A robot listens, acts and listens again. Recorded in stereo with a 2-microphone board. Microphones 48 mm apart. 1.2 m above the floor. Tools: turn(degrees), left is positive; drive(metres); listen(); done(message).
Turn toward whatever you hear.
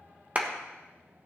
turn(degrees=-35)
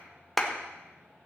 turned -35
done("Found it: a clap, straight ahead, 1 to 2 m away.")